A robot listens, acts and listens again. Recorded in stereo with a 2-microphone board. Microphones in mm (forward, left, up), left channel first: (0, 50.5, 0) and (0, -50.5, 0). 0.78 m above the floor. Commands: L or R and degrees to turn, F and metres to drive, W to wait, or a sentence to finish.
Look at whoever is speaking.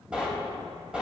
W
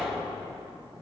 W
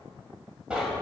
I can't make out anyone speaking to turn to.